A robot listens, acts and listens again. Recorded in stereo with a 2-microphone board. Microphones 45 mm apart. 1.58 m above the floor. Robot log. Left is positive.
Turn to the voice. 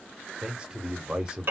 note: The man speaking: about 20° right or 160° right.
cmd yaw -20
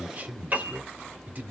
note: So it is at 140° right.
cmd yaw -140
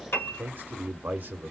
note: The man speaking is now 40° right.
cmd yaw -40
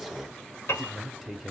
end: Found it: a man speaking, straight ahead, under 1 m away.